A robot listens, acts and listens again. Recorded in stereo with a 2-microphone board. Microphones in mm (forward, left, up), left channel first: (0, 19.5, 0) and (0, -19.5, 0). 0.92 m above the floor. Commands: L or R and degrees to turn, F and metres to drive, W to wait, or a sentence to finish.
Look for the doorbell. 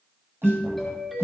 L30
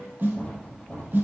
W
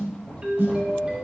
R30
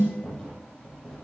W
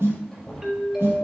R10
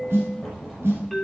Found it: a doorbell, straight ahead, 2 to 4 m away.